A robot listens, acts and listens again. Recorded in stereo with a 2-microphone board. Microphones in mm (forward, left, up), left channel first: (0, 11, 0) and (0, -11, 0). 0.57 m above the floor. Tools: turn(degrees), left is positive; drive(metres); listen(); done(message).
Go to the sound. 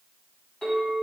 turn(degrees=90)
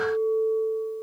drive(metres=1.0)
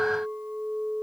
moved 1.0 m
drive(metres=1.0)
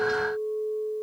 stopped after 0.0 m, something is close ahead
done("Arrived at the clink, straight ahead.")